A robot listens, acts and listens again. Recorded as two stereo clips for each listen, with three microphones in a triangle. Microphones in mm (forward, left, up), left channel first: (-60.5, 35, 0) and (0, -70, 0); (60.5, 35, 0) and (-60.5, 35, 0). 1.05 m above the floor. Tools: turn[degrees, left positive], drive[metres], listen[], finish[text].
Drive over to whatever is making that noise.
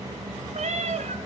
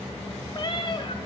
Thought: The cat meowing: 50° right.
Action: turn[-50]
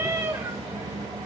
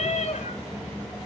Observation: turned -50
Action: drive[1.0]
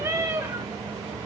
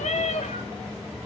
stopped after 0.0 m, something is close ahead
Action: finish[Blocked. The cat meowing is further on, straight ahead.]